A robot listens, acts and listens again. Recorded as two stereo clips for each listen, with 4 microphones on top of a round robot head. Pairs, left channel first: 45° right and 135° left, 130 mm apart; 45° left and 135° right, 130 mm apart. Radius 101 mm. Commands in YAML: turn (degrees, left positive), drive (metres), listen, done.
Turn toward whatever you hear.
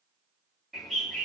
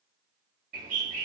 turn: -135
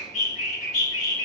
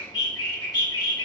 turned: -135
turn: -15
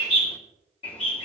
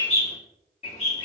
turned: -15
done: "Found it: a bird, straight ahead, 2 to 4 m away."